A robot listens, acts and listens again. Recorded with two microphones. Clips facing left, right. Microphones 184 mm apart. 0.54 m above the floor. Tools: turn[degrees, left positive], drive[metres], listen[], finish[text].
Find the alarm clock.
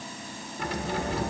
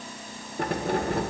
Action: listen[]
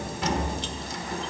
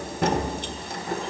Action: listen[]
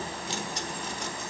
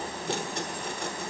Action: finish[I can't make out an alarm clock, only keys jangling.]